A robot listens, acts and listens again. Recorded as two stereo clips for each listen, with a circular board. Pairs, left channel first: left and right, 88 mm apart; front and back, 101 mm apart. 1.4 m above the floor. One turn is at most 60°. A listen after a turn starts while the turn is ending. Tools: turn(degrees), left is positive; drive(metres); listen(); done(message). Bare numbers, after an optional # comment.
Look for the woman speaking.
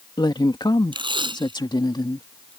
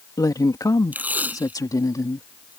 # The woman speaking: 55° left.
turn(55)
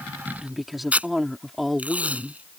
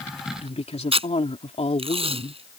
done("Facing the woman speaking.")